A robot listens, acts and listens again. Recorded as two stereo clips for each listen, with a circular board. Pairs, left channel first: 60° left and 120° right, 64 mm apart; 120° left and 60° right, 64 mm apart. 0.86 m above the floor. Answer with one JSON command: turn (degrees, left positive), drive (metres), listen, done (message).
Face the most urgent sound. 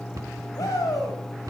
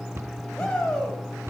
{"turn": 45}
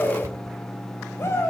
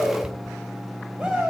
{"turn": 15}
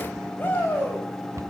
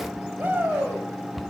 {"done": "Facing the shout, over 4 m away."}